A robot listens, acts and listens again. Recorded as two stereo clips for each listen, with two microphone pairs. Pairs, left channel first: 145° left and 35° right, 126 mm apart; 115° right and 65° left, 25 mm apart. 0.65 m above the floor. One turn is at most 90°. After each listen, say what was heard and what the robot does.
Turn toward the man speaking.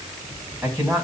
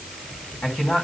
The man speaking: 110° right. Turn 90° right.
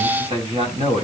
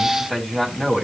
The man speaking is now 20° right. Turn 20° right.
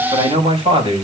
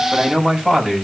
Found it: a man speaking, straight ahead.